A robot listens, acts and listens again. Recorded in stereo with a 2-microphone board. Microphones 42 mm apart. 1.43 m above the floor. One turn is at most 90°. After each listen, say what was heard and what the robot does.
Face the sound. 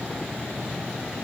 Keep listening.
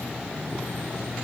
Keep listening.
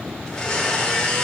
Turn 30° left.
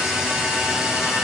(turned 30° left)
So it is at 15° right. Turn 15° right.
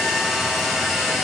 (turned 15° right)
Facing the blender, 2 to 4 m away.